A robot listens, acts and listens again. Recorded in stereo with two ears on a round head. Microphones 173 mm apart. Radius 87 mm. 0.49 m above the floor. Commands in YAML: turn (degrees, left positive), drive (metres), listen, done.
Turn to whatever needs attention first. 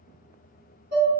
listen: true
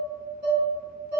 listen: true
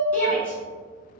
turn: 30
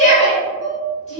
turn: 140
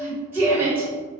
turn: -15
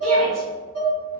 listen: true
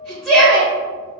done: "Found it: a shout, straight ahead, 1 to 2 m away."